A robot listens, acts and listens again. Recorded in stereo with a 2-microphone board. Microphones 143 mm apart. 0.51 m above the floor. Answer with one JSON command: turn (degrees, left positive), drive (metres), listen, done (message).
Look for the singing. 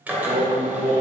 {"turn": -70}
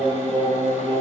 {"turn": 15}
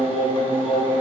{"done": "Facing the singing."}